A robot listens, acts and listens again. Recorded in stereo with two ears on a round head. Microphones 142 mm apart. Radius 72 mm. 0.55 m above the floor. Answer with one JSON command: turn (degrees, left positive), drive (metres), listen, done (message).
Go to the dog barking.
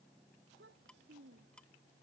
{"listen": true}
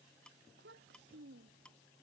{"listen": true}
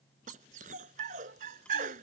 {"turn": -50}
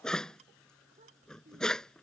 {"drive": 1.0}
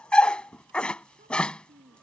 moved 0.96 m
{"drive": 1.0}
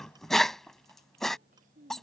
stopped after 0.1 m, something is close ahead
{"done": "I am next to the dog barking."}